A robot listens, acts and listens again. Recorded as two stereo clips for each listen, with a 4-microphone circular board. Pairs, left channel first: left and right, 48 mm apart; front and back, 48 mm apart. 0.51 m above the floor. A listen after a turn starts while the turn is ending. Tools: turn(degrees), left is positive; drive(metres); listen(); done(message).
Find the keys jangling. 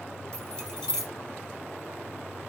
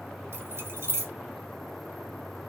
turn(degrees=165)
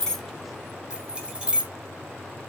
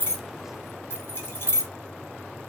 turn(degrees=-20)
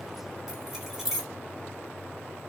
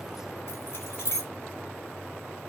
done("Facing the keys jangling.")